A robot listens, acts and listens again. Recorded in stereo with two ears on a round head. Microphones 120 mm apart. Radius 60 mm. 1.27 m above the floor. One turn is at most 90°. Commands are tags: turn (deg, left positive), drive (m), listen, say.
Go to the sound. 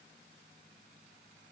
<listen/>
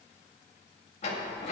<turn deg="50"/>
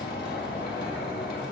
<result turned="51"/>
<turn deg="80"/>
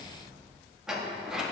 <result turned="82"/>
<drive m="1.0"/>
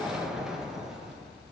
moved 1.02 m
<drive m="1.0"/>
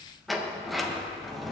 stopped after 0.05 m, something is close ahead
<say>I am next to the sliding door.</say>